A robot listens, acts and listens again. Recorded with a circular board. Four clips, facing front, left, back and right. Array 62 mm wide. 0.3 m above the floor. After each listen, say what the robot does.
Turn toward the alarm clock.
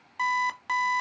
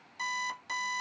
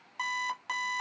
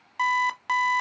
Turn 80° right.
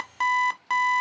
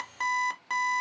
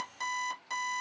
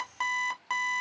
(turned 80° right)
Turn 15° right.
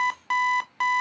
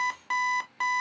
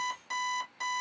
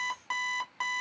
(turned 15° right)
Found it: an alarm clock, straight ahead.